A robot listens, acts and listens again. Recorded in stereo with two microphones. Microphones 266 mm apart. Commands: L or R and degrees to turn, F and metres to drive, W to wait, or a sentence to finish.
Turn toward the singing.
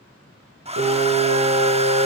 R90
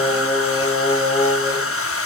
R10
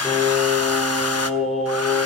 Found it: singing, straight ahead.